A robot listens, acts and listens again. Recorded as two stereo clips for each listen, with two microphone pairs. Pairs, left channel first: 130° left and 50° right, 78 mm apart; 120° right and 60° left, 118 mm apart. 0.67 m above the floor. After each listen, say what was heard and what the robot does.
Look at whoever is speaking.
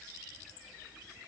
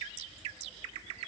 Keep listening.
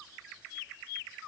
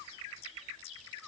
Keep listening.
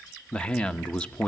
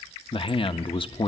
The man speaking: 150° right. Turn 150° right.
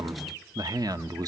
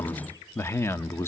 The man speaking is now 55° right. Turn 55° right.
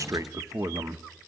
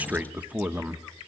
The man speaking is now 15° right. Turn 15° right.
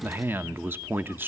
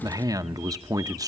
Found it: a man speaking, straight ahead.